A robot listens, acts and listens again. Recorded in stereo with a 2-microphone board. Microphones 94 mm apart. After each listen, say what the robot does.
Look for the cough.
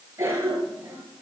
Turn 30° right.
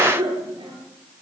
Turn 120° right.
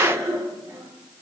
Turn 35° right.
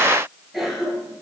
Found it: a cough, straight ahead.